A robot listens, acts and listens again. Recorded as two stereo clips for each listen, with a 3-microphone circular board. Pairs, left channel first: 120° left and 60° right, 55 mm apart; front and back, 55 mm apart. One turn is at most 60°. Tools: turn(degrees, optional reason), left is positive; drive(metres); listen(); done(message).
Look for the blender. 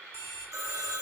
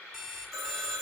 listen()
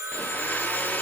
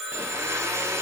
turn(degrees=60, reason="The blender: 175° left.")
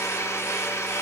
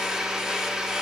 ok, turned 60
turn(degrees=60, reason="The blender is now 105° left.")
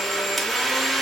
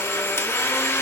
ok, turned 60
turn(degrees=35, reason="The blender is now 35° left.")
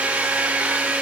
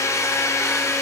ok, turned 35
done("Found it: a blender, straight ahead, under 1 m away.")